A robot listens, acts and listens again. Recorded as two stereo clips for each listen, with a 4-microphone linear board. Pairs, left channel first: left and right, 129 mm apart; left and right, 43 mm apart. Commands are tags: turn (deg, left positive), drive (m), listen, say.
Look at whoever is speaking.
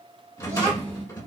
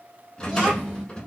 <turn deg="-20"/>
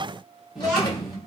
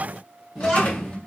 <say>Found it: a child speaking, straight ahead.</say>